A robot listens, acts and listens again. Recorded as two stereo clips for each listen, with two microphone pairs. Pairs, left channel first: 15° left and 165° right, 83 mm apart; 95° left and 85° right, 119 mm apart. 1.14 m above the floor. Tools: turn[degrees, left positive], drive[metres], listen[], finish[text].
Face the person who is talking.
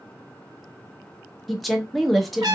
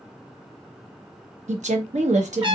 Thought: The woman speaking: 75° right.
Action: turn[-75]
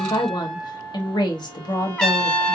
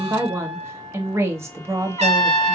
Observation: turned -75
Thought: The woman speaking is now 15° right.
Action: turn[-15]
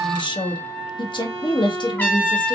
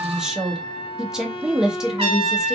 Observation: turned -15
Action: finish[Facing the woman speaking.]